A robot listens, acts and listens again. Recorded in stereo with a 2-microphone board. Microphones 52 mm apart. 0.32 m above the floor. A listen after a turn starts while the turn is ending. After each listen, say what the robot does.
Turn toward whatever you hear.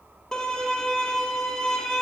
Turn 30° left.
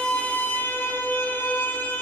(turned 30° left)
Turn 135° left.
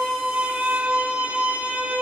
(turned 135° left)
Turn 20° right.
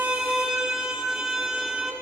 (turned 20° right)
Turn 10° right.
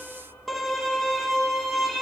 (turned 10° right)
Found it: a violin, straight ahead, 1 to 2 m away.